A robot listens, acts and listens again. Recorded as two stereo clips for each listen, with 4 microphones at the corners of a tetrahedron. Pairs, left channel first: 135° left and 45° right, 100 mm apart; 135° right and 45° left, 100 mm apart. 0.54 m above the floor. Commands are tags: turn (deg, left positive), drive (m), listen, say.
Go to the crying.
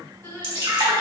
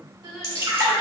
<turn deg="75"/>
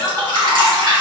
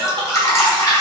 <drive m="1.0"/>
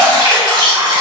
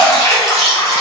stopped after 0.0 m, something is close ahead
<listen/>
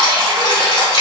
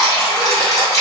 <listen/>
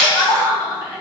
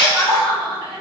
<say>Something is in my way. I am facing the crying but have not reached it.</say>